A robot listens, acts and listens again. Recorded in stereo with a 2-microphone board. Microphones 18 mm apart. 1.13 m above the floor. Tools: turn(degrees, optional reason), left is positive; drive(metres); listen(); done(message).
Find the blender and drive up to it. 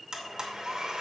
turn(degrees=-40, reason="The blender: about 40° right or 140° right.")
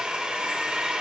turn(degrees=-100, reason="So it is at 100° right.")
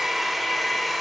drive(metres=1.0)
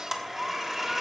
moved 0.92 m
turn(degrees=-20, reason="The blender is now 20° right.")
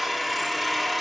drive(metres=1.0)
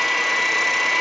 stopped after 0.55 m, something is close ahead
done("Arrived at the blender, straight ahead.")